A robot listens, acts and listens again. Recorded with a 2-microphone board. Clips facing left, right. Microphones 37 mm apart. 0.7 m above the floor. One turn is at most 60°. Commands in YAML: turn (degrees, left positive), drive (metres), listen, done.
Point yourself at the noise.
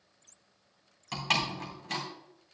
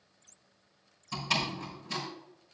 turn: 60
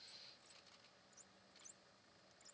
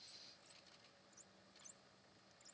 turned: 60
turn: 30
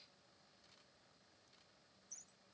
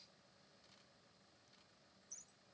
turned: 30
done: "I heard a door slam from this way, but can't make it out now."